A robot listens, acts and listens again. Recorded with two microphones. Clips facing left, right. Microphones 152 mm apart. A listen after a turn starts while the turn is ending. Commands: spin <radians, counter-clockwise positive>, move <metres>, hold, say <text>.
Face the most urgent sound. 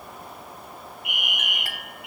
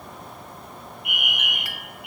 spin -0.87
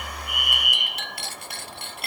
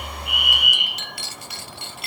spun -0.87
spin -1.40
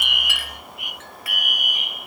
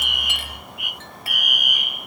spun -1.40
spin 0.52
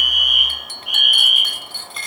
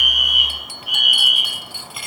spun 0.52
say Facing the fire alarm, over 4 m away.